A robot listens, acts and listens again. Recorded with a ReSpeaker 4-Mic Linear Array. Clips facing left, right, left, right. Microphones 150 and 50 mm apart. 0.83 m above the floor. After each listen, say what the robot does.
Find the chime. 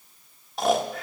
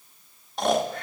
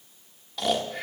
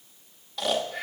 Keep listening.
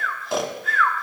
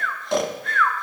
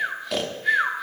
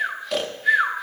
Keep listening.
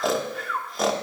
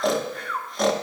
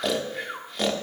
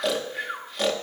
I can't make out a chime, only snoring.